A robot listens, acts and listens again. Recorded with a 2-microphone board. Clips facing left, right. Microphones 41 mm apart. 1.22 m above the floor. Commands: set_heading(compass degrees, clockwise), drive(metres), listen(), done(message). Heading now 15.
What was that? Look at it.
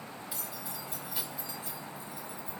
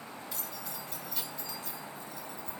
set_heading(345)
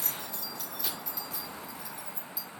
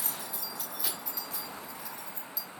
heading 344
set_heading(314)
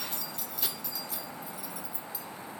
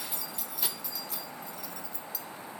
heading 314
set_heading(284)
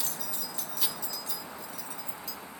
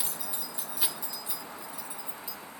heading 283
set_heading(303)
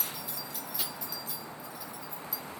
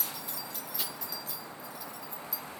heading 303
done("Facing the keys jangling, 1 to 2 m away.")